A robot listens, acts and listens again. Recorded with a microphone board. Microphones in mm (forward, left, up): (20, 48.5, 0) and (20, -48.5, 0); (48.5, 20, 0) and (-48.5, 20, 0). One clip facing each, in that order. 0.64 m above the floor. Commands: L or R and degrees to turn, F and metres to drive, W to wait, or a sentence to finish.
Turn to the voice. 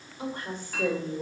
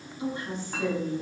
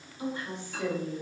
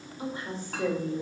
L125
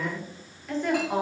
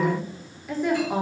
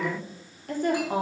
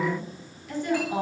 Found it: a woman speaking, straight ahead.